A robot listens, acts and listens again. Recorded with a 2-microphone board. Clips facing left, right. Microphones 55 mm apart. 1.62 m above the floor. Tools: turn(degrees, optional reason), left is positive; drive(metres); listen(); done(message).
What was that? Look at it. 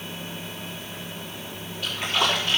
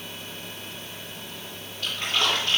turn(degrees=30)
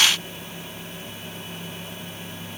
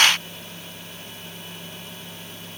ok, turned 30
listen()
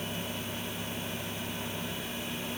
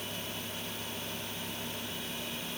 done("I heard a splash, but can't make it out now. It was about 20° right or 140° left.")